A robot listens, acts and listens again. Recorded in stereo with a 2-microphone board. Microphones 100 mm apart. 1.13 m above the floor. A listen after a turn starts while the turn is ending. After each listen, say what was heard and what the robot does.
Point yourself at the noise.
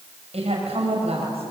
Turn 90° right.
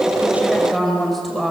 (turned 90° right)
Found it: a woman speaking, straight ahead.